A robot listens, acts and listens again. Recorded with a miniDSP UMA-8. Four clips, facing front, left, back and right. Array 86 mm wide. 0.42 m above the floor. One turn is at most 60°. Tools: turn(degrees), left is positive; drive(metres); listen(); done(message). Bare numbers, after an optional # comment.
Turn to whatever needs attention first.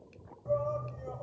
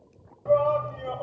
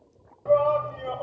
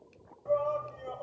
# The shout: 150° left.
turn(60)
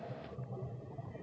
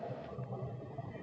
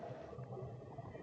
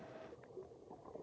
# The shout is now 90° left.
turn(60)
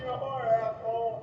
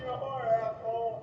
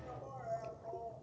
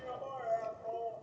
# The shout is now 25° left.
turn(25)
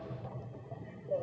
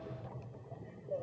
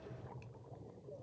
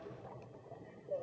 done("Facing the shout.")